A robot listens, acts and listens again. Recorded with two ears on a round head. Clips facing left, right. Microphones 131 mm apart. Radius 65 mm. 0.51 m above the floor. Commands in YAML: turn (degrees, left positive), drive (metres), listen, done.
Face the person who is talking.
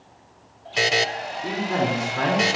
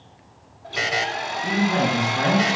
turn: 30
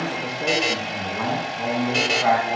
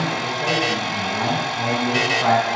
turn: -10
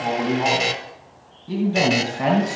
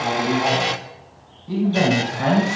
turn: 10
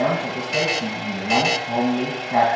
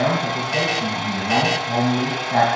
done: "Facing the man speaking."